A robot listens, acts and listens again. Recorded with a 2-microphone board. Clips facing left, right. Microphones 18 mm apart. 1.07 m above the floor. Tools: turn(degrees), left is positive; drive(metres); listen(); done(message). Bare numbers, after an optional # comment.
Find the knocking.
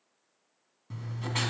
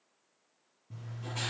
listen()
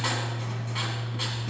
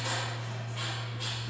listen()
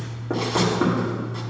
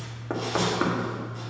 # The knocking: about 25° right or 155° right.
turn(-25)
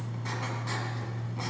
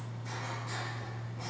listen()
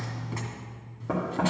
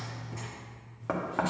# So it is at 130° right.
turn(-130)
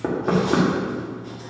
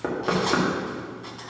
done("Found it: knocking, straight ahead, 1 to 2 m away.")